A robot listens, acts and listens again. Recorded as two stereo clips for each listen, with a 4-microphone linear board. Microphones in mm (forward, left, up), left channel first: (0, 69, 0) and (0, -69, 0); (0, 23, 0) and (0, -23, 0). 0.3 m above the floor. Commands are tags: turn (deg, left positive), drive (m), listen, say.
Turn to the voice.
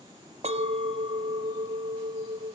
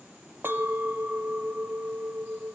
<listen/>
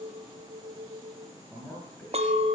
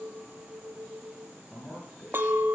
<turn deg="30"/>
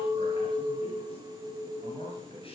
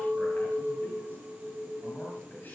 <turn deg="135"/>
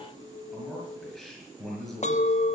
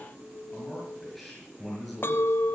<say>Facing the man speaking.</say>